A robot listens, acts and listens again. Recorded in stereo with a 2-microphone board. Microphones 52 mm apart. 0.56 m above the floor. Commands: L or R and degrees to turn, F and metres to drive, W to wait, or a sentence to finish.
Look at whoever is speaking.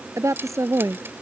R90
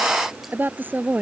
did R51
R35
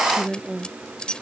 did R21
R15
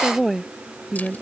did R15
Found it: a woman speaking, straight ahead.